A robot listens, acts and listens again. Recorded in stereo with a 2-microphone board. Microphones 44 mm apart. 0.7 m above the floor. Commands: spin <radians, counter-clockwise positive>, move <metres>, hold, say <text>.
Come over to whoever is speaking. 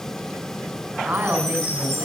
spin -0.87
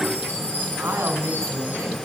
spin -1.31
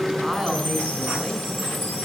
spin -0.17
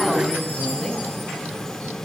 move 1.0
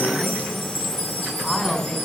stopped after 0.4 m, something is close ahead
say Something is in my way. I am facing the woman speaking but have not reached it.